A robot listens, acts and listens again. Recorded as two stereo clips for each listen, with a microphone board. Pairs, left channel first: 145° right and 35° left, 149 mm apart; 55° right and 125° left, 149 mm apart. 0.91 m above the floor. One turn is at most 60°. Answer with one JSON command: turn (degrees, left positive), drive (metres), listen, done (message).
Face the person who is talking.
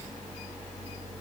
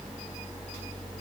{"listen": true}
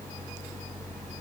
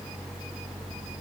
{"listen": true}
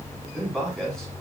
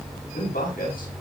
{"turn": -60}
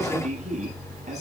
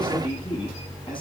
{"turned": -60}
{"done": "Found it: a man speaking, straight ahead, over 4 m away."}